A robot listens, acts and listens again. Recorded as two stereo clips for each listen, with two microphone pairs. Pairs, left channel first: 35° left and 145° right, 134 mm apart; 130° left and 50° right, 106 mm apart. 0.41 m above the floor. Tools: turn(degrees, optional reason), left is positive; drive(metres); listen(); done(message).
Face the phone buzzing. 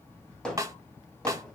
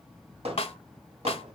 listen()
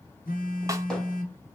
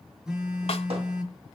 turn(degrees=35, reason="The phone buzzing: 35° left.")
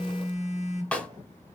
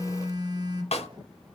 done("Facing the phone buzzing.")